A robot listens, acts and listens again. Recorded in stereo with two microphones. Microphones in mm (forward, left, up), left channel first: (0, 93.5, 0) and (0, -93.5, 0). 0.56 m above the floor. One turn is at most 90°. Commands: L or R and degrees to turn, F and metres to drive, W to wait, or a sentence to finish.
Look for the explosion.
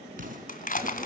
R45
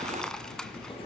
W
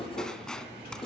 I heard an explosion, but can't make it out now. It was about straight ahead or 90° right.